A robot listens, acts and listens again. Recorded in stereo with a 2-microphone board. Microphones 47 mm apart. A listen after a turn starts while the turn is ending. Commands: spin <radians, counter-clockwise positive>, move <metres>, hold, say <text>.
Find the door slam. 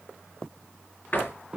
spin 0.70
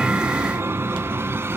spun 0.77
hold
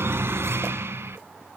say I heard a door slam, but can't make it out now. It was about straight ahead or 95° left.